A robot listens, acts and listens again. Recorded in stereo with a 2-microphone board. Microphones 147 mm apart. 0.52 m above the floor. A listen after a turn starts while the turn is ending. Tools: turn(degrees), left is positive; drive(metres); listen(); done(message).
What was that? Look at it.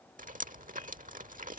turn(degrees=-65)
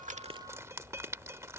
turn(degrees=-20)
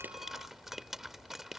done("Found it: dripping, straight ahead.")